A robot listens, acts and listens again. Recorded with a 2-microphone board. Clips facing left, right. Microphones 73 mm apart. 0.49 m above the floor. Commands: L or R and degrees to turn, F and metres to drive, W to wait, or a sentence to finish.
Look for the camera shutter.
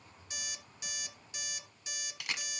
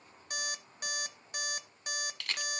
L30
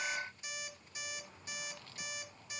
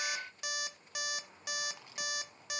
W
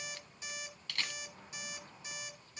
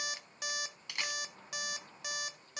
R20
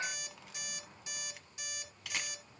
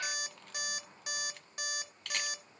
Found it: a camera shutter, straight ahead.